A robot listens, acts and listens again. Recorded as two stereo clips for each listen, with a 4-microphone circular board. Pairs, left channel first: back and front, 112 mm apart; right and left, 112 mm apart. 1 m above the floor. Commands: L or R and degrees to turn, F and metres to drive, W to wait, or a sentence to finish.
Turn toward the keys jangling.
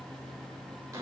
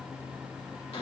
W
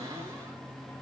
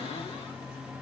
W
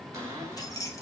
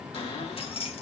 R120
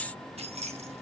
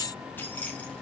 R15
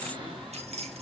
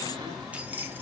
L15
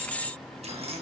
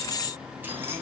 W
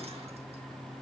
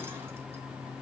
W
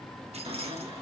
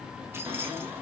L20
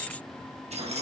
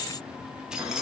Facing the keys jangling.